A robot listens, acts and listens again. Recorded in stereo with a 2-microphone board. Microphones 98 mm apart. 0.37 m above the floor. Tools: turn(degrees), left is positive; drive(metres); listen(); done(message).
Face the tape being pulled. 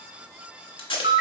turn(degrees=65)
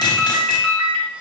listen()
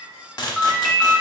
turn(degrees=50)
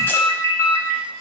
listen()
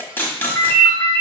turn(degrees=25)
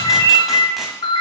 listen()
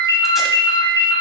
listen()
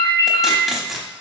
done("Facing the tape being pulled.")